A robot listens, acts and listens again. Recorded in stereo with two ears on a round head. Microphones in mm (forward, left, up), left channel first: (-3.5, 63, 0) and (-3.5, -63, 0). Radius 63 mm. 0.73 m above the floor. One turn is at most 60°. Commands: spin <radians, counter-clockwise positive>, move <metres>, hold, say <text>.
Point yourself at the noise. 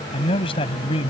spin 0.70
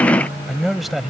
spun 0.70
say Found it: a man speaking, straight ahead.